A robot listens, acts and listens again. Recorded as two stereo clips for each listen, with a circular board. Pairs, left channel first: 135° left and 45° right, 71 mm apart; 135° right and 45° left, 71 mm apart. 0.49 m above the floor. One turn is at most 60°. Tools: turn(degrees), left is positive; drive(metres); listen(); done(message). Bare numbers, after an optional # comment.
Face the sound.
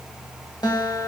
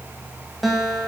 # The guitar: 135° left.
turn(60)
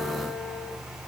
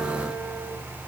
# Nothing new. It was at 75° left.
turn(60)
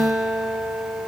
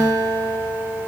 # The guitar is now 35° left.
turn(35)
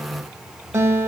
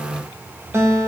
done("Facing the guitar, 1 to 2 m away.")